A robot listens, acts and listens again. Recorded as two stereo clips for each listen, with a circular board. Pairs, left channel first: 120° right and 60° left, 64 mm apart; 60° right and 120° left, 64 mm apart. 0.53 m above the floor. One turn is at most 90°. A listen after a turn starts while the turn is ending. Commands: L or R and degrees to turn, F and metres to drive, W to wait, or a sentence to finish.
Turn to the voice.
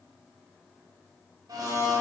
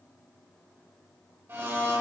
W
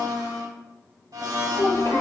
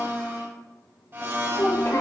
R90
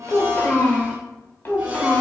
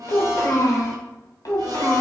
R75
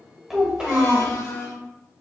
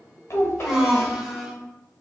R15
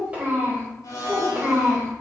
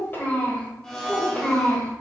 Facing the child speaking.